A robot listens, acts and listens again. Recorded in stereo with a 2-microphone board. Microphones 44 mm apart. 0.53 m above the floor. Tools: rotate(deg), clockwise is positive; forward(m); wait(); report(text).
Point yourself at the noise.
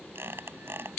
rotate(65)
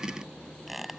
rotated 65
report("Facing the squeak.")